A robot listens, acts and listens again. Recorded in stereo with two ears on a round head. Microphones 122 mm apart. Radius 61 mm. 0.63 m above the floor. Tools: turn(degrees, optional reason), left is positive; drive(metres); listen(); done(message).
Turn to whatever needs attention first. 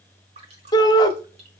turn(degrees=30, reason="The shout: about 30° left or 150° left.")
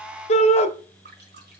turn(degrees=115, reason="So it is at 115° left.")
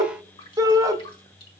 turn(degrees=-30, reason="The shout is now 30° right.")
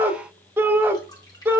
turn(degrees=-20, reason="The shout is now 20° right.")
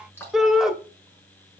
done("Found it: a shout, straight ahead.")